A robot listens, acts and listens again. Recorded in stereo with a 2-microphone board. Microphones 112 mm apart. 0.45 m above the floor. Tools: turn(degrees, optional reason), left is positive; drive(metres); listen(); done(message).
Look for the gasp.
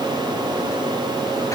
listen()
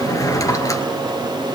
listen()
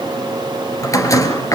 done("I can't make out a gasp to turn to.")